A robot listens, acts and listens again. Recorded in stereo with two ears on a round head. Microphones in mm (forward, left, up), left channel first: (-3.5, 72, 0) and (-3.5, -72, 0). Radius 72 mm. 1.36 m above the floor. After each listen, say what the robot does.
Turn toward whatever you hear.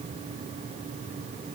Keep listening.
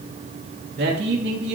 Turn 65° right.
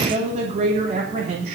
Turn 40° right.
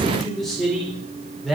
Found it: a man speaking, straight ahead.